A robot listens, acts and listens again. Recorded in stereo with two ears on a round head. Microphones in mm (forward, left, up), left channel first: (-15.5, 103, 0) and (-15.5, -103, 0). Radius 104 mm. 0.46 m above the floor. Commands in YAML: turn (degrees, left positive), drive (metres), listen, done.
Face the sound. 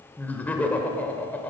turn: 30
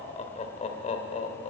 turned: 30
turn: 140
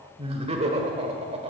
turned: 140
turn: -30
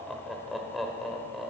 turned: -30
done: "Found it: laughter, straight ahead, 1 to 2 m away."